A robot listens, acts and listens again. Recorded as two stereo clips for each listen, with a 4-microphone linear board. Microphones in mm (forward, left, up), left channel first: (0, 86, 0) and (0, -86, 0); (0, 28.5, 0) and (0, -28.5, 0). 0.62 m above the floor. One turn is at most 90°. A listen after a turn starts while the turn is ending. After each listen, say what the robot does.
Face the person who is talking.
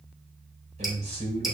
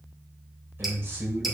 Turn 45° right.
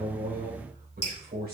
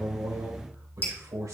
Turn 90° right.
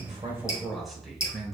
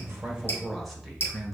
Found it: a man speaking, straight ahead.